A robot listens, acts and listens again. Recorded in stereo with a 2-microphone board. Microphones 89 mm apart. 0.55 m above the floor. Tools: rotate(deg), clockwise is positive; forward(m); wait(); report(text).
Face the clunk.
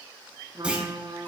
rotate(30)
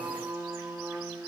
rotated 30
wait()
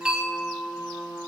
report("I heard a clunk, but can't make it out now. It was about 15° left or 135° right.")